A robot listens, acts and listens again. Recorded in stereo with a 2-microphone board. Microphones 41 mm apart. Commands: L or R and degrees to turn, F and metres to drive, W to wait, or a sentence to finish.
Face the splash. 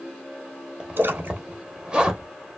R65
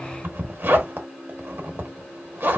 W
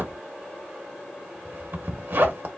I heard a splash, but can't make it out now. It was about straight ahead or 50° right.